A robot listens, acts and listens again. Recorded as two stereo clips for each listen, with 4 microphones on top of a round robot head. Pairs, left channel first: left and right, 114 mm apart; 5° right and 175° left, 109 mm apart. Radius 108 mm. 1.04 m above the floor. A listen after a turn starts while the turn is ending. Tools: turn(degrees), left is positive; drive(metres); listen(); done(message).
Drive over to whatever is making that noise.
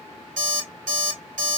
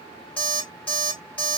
turn(degrees=-85)
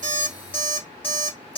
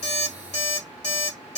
turn(degrees=10)
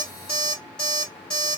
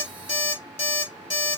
drive(metres=1.0)
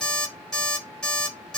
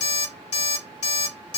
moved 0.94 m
drive(metres=1.0)
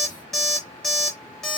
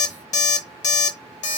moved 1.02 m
drive(metres=1.0)
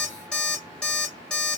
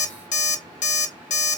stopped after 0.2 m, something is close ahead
done("I am next to the alarm clock.")